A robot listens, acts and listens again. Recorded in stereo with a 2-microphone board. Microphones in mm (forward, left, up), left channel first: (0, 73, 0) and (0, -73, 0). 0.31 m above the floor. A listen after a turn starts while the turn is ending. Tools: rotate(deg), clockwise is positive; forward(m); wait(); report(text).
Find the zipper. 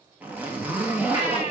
rotate(30)
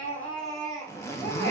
rotate(-20)
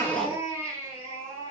wait()
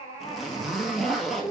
report("Facing the zipper, 1 to 2 m away.")